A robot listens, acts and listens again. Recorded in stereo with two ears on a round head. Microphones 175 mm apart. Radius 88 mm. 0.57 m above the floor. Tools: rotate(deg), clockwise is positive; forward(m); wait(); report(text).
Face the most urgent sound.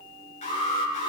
rotate(-35)
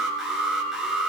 report("Found it: an alarm, straight ahead, over 4 m away.")